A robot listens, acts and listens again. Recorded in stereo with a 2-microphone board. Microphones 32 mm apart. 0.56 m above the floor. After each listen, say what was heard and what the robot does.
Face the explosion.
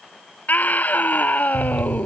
The explosion: about 50° left or 130° left. Turn 50° left.
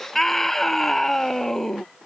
Keep listening.
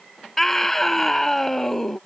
I heard an explosion, but can't make it out now. It was about straight ahead or 80° left.